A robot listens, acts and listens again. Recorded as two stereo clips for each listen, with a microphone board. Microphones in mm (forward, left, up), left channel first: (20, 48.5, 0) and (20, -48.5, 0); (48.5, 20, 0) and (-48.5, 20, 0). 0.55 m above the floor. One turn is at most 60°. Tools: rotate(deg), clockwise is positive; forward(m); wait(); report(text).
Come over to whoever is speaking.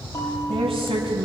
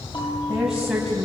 rotate(60)
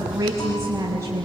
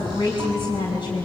rotate(30)
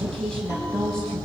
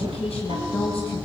forward(1.0)
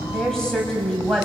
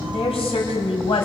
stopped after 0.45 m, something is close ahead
report("Something is in my way. I am facing the woman speaking but have not reached it.")